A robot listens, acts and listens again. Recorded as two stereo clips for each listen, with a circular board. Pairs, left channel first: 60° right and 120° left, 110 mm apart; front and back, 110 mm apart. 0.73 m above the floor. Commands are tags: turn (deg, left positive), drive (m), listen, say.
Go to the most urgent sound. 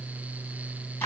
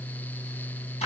<listen/>
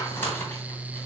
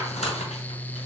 <listen/>
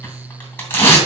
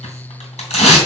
<say>I can't make out anything urgent to turn to.</say>